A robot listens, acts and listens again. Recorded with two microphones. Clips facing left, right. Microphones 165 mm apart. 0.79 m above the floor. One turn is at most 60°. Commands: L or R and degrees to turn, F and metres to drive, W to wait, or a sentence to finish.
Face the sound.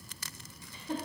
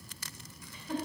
L30
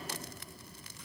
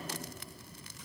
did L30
W
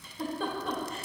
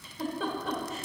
Facing the giggle.